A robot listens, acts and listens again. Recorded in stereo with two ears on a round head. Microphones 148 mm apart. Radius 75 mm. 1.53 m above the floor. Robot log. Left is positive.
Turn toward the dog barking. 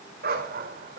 note: The dog barking: about 50° right or 130° right.
cmd yaw -50
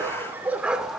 end: Found it: a dog barking, straight ahead, 1 to 2 m away.